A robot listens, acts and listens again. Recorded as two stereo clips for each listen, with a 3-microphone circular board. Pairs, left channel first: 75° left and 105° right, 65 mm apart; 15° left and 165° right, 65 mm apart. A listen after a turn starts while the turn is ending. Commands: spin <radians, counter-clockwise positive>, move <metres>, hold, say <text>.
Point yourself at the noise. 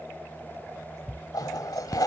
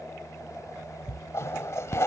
spin 1.05
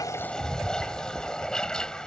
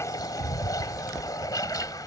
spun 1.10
say Found it: a toilet flushing, straight ahead.